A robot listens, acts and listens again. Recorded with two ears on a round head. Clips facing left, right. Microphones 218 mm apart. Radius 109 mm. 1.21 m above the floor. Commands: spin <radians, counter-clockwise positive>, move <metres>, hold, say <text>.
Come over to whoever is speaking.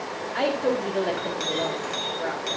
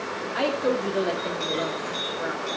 spin -0.52
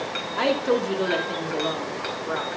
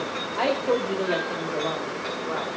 spin 0.44
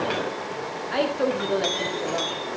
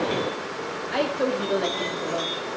move 1.0
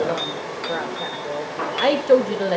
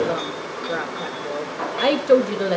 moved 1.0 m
move 1.0
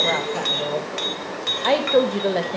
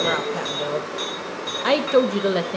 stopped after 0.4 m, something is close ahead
spin -0.26
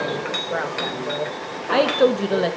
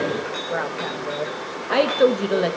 say I am next to the woman speaking.